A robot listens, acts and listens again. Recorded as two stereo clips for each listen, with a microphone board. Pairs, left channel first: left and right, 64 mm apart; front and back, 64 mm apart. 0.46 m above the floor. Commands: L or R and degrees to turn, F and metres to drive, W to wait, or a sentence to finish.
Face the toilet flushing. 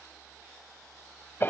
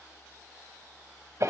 W
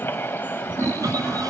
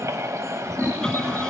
R75
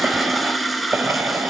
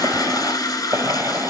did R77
Found it: a toilet flushing, straight ahead, 1 to 2 m away.